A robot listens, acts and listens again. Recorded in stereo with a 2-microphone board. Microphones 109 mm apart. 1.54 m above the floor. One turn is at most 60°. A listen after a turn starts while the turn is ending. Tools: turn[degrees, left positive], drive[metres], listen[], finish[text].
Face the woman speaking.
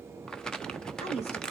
Thought: The woman speaking: about 75° left or 105° left.
Action: turn[60]
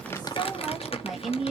Action: finish[Facing the woman speaking, 2 to 4 m away.]